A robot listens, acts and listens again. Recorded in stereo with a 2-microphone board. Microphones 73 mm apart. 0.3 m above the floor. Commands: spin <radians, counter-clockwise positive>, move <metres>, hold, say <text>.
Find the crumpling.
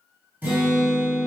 hold
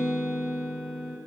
hold
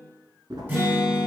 spin -1.22
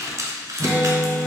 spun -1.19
spin -0.79
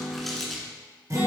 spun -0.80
say Found it: crumpling, straight ahead.